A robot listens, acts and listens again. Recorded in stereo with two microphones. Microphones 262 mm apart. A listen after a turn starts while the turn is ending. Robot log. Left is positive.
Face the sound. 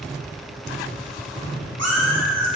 cmd yaw -90
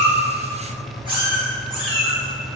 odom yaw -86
note: So it is at 20° right.
cmd yaw -20
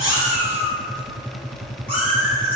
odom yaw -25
end: Found it: a cat meowing, straight ahead, over 4 m away.